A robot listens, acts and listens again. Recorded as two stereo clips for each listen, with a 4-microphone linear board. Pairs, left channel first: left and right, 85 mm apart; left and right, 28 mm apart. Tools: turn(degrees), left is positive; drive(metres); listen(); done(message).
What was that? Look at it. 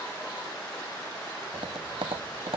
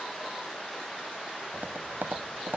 turn(degrees=-90)
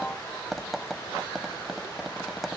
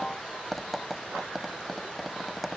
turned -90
done("Found it: tapping, straight ahead.")